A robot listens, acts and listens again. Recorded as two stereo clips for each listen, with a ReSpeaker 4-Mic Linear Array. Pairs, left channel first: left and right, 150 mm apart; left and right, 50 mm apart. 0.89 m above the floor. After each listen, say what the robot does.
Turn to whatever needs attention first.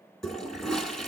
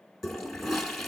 Keep listening.
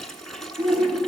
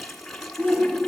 Turn 40° right.
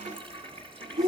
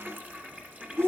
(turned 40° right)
Turn 95° right.
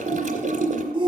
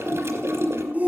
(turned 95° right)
Turn 35° right.
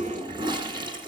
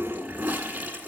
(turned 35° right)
Keep listening.
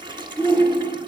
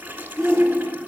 Turn 10° left.
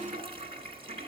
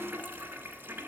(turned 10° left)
Keep listening.
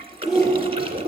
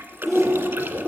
Found it: a shout, straight ahead.